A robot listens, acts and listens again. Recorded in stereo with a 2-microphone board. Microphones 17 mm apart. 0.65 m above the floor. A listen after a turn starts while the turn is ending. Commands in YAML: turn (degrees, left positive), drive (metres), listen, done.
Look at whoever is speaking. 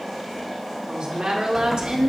turn: -60
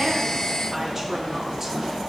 listen: true
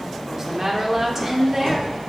turn: -20
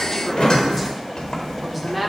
done: "Facing the woman speaking, 1 to 2 m away."